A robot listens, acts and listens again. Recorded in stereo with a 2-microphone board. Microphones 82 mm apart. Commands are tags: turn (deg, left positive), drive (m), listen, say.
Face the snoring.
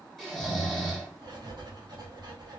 <turn deg="30"/>
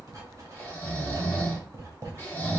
<turn deg="150"/>
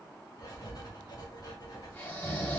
<turn deg="30"/>
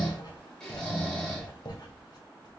<turn deg="10"/>
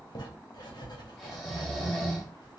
<say>Facing the snoring.</say>